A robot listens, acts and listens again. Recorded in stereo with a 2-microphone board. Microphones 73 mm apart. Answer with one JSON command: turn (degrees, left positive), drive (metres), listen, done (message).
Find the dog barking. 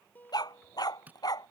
{"turn": 60}
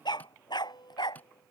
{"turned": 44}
{"turn": 80}
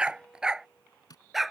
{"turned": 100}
{"done": "Facing the dog barking."}